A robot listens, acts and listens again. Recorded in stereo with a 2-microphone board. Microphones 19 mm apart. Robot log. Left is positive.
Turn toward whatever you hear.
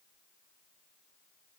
cmd idle
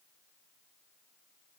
cmd idle
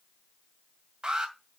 note: The alarm: about 50° right or 130° right.
cmd yaw -50
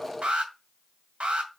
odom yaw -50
note: So it is at 80° right.
cmd yaw -80
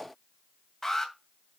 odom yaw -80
note: The alarm is now 20° left.
cmd yaw +20
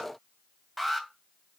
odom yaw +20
end: Facing the alarm, 2 to 4 m away.